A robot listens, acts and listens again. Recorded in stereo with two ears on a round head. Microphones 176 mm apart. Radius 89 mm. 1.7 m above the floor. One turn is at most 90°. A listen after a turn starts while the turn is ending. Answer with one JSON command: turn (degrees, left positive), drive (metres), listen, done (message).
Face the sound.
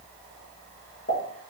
{"turn": 50}
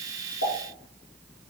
{"listen": true}
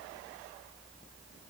{"done": "I heard a pop, but can't make it out now. It was about straight ahead or 80° left."}